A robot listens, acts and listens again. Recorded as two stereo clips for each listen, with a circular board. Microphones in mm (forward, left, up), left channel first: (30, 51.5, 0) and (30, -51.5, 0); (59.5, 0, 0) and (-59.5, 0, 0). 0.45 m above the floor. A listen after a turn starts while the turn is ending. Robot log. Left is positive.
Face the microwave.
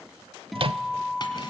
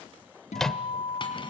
note: The microwave: 85° right.
cmd yaw -85
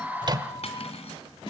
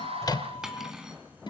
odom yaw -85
cmd idle
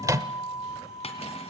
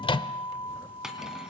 note: The microwave is now 35° right.
cmd yaw -35
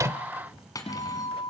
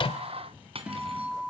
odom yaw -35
cmd idle
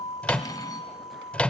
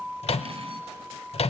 note: The microwave is now 15° left.
cmd yaw +15
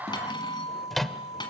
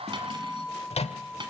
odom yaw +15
end: Found it: a microwave, straight ahead.